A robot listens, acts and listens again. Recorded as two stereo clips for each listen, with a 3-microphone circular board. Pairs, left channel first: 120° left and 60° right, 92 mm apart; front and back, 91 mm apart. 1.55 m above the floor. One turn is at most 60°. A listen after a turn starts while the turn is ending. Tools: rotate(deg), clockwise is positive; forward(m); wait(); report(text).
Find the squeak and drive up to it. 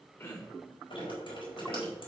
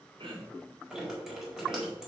wait()
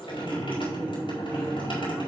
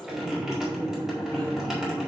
wait()
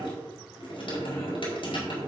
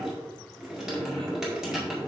report("I can't make out a squeak to turn to.")